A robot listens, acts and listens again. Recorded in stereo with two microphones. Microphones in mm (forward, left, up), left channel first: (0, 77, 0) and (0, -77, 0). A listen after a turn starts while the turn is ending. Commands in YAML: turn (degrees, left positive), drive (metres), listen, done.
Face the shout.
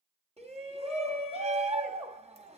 turn: -40
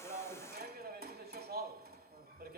turn: -95
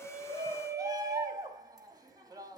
turn: -25
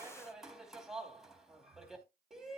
done: "Facing the shout, 2 to 4 m away."